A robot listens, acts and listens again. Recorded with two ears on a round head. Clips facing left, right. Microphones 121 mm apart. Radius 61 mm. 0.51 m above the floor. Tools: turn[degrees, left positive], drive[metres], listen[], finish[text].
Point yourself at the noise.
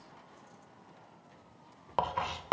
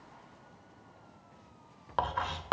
Action: turn[30]
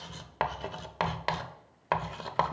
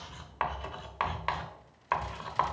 Thought: So it is at 135° left.
Action: turn[135]
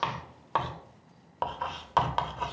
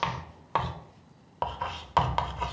Action: finish[Found it: writing, straight ahead, under 1 m away.]